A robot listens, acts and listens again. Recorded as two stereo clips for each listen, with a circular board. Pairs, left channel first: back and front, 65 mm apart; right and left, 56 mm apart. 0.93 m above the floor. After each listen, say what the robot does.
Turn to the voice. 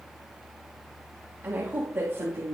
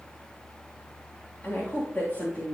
Turn 40° right.
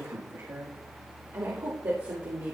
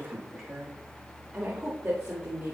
Turn 30° left.
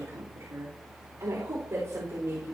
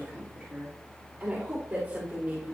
Turn 20° left.
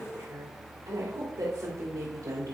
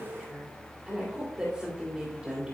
Found it: a woman speaking, straight ahead, 2 to 4 m away.